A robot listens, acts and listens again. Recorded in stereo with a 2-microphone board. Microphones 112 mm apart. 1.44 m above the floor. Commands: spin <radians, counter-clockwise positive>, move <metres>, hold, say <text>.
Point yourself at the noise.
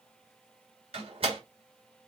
spin -1.05
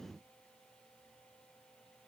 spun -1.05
hold
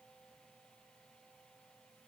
say I heard a door slam, but can't make it out now. It was about straight ahead or 60° right.